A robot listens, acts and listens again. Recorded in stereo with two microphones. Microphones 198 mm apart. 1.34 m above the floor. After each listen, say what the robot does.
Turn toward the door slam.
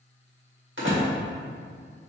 Turn 90° right.
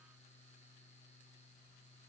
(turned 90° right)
Facing where the door slam came from. I can't hear it now.